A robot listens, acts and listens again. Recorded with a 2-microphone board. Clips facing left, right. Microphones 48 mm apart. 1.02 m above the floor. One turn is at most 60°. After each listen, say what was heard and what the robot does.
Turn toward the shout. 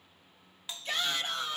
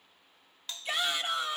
Turn 30° right.
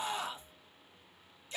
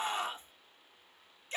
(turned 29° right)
So it is at 135° right. Turn 60° right.
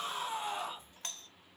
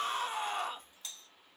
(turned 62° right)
The shout is now 75° right. Turn 60° right.
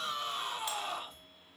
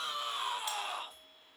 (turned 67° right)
Found it: a shout, straight ahead, 1 to 2 m away.